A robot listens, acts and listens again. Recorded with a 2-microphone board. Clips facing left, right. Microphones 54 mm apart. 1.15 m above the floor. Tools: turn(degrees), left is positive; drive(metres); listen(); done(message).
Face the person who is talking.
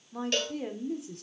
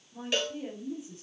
turn(degrees=70)
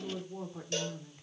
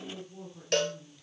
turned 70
turn(degrees=40)
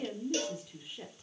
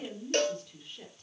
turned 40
turn(degrees=10)
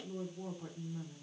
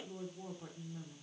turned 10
done("Facing the woman speaking, 2 to 4 m away.")